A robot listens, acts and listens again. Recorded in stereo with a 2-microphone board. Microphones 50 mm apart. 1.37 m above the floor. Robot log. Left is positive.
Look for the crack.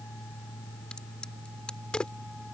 note: The crack: about 20° left or 160° left.
cmd yaw +20
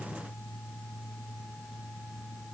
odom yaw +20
cmd idle
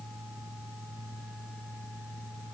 end: I heard a crack, but can't make it out now. It was about straight ahead or 140° left.